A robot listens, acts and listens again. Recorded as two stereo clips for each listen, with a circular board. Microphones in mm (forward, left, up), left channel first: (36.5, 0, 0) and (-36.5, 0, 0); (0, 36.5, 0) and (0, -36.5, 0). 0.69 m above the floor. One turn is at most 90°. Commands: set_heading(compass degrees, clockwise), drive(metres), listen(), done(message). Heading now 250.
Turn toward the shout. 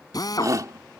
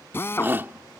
set_heading(340)
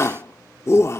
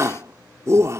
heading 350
set_heading(35)
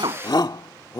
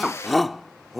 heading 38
done("Found it: a shout, straight ahead.")